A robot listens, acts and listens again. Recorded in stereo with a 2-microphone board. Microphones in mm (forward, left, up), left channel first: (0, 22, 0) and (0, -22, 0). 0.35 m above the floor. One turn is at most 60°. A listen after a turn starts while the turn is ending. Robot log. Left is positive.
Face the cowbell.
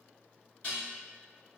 cmd idle
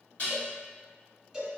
cmd yaw +30
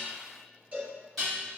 note: So it is at 40° right.
cmd yaw -40
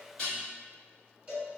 note: The cowbell is now 25° right.
cmd yaw -25
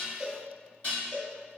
end: Facing the cowbell.